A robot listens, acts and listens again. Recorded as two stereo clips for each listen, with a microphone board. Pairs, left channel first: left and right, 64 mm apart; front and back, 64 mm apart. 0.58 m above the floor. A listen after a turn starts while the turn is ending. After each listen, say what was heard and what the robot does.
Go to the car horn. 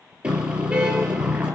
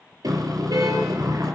The car horn: 165° right. Turn 165° right.
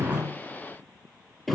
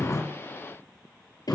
Drive 1.0 m forward.
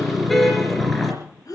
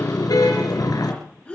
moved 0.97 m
Drive 1.0 m forward.
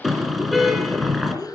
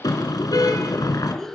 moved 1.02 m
Drive 1.0 m forward.
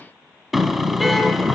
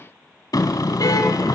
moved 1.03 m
Drive 1.0 m forward.
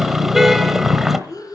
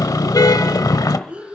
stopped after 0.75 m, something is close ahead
I am next to the car horn.